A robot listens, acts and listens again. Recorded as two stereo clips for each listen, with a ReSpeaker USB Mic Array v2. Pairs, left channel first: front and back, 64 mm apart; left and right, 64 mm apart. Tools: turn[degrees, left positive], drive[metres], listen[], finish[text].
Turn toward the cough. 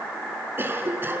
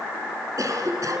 Thought: The cough: 125° right.
Action: turn[-125]
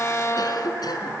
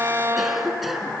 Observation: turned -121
Action: finish[Found it: a cough, straight ahead.]